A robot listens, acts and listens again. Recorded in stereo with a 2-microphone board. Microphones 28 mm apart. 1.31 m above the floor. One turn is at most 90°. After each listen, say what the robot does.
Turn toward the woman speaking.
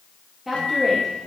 Turn 30° right.
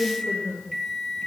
Turn 90° right.
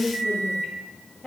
Turn 10° left.
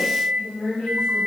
Turn 10° left.
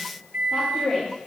Found it: a woman speaking, straight ahead.